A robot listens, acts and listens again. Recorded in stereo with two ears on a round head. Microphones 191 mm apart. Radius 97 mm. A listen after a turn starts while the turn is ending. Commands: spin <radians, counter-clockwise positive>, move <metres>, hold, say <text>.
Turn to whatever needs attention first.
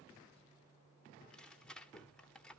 hold
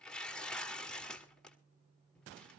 hold
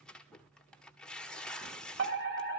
spin -0.96
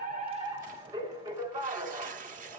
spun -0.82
spin -0.44
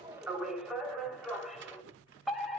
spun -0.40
say Facing the fire alarm, 2 to 4 m away.